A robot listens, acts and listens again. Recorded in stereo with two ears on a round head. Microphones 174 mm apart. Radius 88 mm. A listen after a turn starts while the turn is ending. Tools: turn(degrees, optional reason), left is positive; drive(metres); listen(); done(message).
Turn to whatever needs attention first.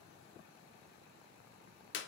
listen()
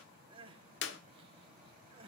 turn(degrees=-25, reason="The crying: about 25° right or 155° right.")
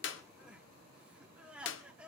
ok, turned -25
done("Found it: crying, straight ahead.")